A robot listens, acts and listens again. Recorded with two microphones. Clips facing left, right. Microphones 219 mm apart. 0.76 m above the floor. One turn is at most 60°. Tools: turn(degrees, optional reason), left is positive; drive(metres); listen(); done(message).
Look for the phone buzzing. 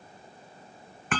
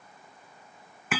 listen()
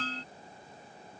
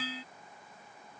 listen()
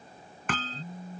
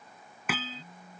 turn(degrees=25, reason="The phone buzzing: about 25° left or 155° left.")
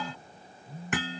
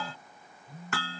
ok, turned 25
done("Facing the phone buzzing.")